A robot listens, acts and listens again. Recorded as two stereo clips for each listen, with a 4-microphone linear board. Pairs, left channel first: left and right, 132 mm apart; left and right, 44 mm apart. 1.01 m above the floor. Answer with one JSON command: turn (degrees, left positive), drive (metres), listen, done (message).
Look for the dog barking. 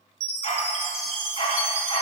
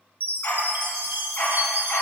{"turn": 40}
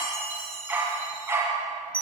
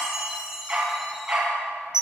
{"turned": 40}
{"turn": -20}
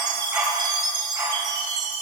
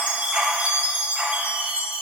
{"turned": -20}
{"turn": -20}
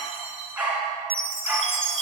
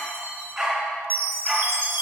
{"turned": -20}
{"turn": -10}
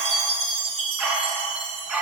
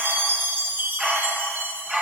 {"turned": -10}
{"done": "Found it: a dog barking, straight ahead."}